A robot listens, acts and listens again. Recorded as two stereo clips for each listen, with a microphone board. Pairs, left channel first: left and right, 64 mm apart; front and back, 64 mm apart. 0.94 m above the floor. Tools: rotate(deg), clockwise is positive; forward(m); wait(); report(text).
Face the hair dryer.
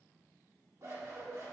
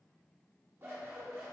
wait()
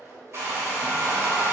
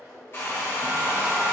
rotate(45)
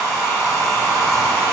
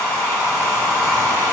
rotate(15)
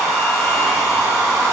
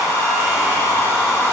report("Facing the hair dryer, 1 to 2 m away.")